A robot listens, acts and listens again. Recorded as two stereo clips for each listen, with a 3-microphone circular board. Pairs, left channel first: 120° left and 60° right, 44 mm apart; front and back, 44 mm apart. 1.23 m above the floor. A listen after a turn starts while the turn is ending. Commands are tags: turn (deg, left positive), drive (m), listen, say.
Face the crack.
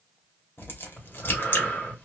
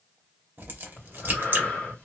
<turn deg="145"/>
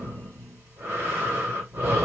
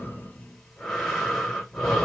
<say>I heard a crack from this way, but can't make it out now.</say>